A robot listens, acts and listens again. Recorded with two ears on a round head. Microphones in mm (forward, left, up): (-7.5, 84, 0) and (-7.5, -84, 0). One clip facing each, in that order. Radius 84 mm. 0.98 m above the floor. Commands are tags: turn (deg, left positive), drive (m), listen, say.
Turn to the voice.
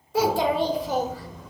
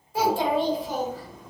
<turn deg="55"/>
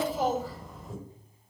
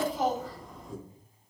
<say>Found it: a child speaking, straight ahead.</say>